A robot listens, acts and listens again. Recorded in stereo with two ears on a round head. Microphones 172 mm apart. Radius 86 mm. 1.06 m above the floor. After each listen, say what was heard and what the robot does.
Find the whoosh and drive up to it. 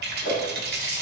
The whoosh: about 25° left or 155° left. Turn 25° left.
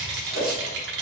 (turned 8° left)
The whoosh: about 35° left or 145° left. Turn 35° left.
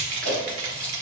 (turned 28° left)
Keep listening.
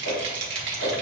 So it is at 115° left. Turn 115° left.
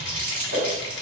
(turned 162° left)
The whoosh is now 45° right. Turn 45° right.
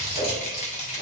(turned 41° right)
Drive 1.0 m forward.
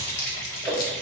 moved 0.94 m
Drive 1.0 m forward.
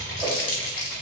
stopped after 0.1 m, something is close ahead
Keep listening.
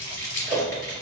I am next to the whoosh.